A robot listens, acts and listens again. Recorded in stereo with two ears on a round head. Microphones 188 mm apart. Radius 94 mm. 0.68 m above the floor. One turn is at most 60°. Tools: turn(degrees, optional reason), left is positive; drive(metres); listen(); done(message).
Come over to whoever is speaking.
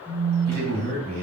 turn(degrees=-45, reason="The man speaking: about 45° right or 135° right.")
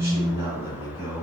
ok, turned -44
turn(degrees=-15, reason="So it is at 15° right.")
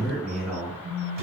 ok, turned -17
drive(metres=1.0)
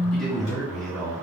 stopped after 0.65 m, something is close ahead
done("I am next to the man speaking.")